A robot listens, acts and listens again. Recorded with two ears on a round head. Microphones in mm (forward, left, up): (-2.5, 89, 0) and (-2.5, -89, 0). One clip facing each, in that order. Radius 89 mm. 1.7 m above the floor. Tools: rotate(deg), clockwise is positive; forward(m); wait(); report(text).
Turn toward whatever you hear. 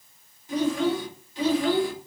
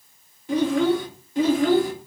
rotate(35)
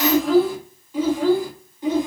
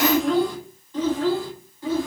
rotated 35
rotate(-20)
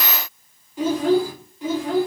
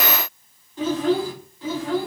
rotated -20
rotate(-15)
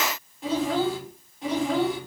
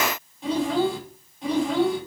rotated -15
report("Facing the child speaking, 2 to 4 m away.")